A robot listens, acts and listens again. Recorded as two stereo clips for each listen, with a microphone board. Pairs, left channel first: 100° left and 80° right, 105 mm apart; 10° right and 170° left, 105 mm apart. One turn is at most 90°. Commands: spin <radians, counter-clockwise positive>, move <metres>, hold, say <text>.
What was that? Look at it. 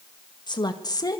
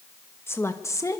spin 0.79
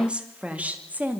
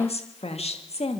say Found it: a woman speaking, straight ahead.